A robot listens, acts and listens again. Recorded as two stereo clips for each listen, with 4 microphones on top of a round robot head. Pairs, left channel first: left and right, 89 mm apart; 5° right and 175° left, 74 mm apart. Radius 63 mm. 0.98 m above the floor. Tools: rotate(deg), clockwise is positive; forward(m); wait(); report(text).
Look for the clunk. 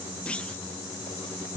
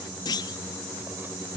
rotate(-10)
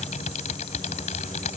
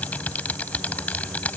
report("I heard a clunk from this way, but can't make it out now.")